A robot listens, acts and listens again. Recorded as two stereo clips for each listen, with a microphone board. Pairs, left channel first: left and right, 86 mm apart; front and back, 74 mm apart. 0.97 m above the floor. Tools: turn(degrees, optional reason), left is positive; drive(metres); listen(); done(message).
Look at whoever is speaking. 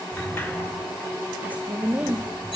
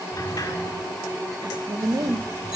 turn(degrees=-160, reason="The woman speaking: 160° right.")
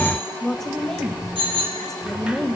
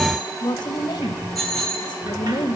done("Facing the woman speaking, 1 to 2 m away.")